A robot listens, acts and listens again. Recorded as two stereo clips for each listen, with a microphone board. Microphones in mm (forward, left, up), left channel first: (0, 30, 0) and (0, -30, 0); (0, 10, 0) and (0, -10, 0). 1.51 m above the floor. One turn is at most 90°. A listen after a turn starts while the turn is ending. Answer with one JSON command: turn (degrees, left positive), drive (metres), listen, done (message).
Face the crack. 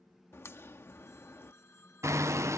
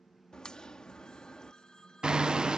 {"turn": 45}
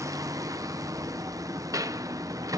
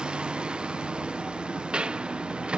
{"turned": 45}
{"listen": true}
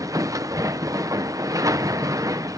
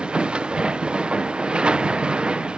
{"done": "I heard a crack, but can't make it out now. It was about straight ahead or 90° left."}